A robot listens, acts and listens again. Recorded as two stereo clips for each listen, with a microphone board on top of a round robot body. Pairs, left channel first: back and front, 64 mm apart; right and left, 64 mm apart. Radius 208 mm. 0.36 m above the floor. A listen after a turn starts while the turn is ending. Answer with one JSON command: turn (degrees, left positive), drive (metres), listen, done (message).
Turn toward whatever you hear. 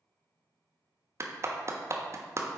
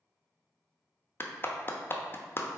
{"turn": -40}
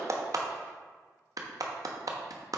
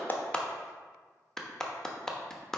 {"turn": -10}
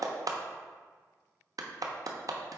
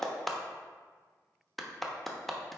{"done": "Found it: a clap, straight ahead."}